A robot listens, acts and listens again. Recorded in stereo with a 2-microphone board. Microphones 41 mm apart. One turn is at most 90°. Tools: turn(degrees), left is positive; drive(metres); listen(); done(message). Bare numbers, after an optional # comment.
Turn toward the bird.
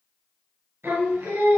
listen()
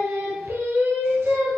listen()
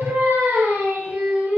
done("I can't make out a bird, only singing.")